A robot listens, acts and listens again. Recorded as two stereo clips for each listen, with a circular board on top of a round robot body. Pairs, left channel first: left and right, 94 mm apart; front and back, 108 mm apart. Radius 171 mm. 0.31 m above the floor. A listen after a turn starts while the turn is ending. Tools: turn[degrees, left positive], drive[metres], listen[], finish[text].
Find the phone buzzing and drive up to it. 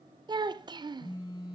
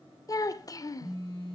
Thought: The phone buzzing: 50° left.
Action: turn[50]
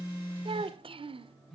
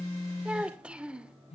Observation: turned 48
Action: drive[1.0]
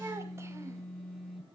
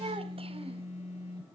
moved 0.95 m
Action: drive[1.0]
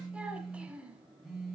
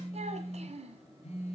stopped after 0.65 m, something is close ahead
Action: finish[Something is in my way. I am facing the phone buzzing but have not reached it.]